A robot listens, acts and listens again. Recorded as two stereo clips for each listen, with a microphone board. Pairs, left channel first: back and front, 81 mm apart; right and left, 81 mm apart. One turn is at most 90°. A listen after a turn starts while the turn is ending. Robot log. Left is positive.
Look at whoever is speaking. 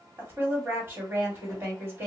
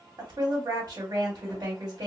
note: The woman speaking: 60° left.
cmd yaw +60
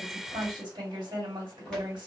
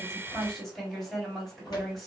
end: Facing the woman speaking.